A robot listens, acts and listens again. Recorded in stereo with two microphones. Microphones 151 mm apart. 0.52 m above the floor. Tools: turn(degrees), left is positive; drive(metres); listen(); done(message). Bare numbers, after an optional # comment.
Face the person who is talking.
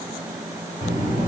# The child speaking: about 50° left or 130° left.
turn(50)
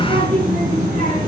# So it is at 75° left.
turn(75)
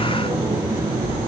# The child speaking is now 35° left.
turn(35)
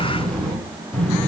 # The child speaking is now 10° left.
turn(10)
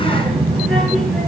done("Facing the child speaking.")